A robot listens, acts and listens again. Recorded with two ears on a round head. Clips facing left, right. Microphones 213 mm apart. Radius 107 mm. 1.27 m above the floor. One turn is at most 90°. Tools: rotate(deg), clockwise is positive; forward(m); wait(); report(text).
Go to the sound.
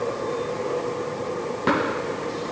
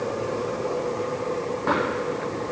rotate(-45)
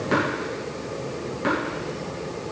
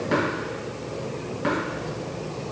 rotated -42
forward(1.0)
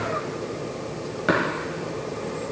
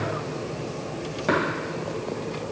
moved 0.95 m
rotate(-15)
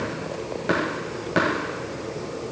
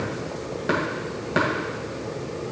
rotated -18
forward(1.0)
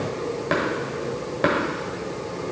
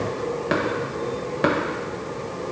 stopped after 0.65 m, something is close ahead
report("I am next to the tapping.")